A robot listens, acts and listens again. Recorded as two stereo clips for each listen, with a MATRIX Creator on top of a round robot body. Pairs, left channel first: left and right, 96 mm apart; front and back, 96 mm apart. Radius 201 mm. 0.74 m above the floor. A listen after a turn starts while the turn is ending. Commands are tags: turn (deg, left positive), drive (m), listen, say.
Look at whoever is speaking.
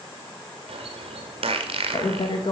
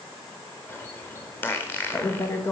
<turn deg="60"/>
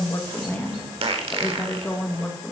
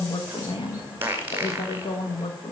<turn deg="20"/>
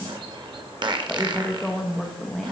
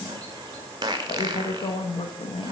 <say>Found it: a woman speaking, straight ahead.</say>